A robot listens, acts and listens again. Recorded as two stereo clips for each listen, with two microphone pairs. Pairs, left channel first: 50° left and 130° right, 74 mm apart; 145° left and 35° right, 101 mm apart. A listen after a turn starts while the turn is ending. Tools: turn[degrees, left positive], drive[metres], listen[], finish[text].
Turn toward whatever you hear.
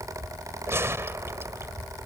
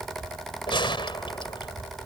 Thought: The gunshot: straight behind.
Action: turn[180]
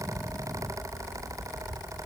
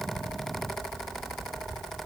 Action: finish[Facing where the gunshot came from. I can't hear it now.]